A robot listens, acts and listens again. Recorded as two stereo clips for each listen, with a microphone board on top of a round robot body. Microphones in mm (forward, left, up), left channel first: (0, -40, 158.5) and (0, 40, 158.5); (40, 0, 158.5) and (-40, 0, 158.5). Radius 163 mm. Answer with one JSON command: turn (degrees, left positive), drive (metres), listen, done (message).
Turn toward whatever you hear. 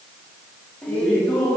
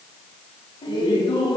{"turn": -15}
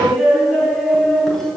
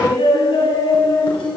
{"done": "Facing the laughter."}